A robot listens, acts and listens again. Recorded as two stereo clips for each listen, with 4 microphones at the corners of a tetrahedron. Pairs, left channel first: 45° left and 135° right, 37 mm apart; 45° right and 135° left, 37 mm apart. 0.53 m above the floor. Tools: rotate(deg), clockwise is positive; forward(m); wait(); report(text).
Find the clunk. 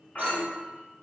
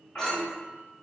report("Facing the clunk, under 1 m away.")